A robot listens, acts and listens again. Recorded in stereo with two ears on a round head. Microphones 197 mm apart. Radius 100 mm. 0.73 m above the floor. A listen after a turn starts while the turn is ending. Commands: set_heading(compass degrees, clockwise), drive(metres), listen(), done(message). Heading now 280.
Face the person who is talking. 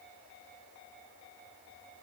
listen()
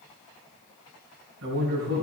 set_heading(330)
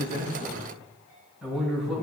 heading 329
done("Found it: a man speaking, straight ahead.")